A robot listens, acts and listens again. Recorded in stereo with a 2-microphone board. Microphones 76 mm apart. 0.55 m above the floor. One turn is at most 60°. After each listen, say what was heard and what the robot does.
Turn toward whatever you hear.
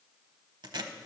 The tape being pulled: about 70° right or 110° right. Turn 60° right.
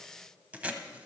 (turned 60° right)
So it is at 20° right. Turn 20° right.
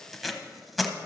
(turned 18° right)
Facing the tape being pulled, under 1 m away.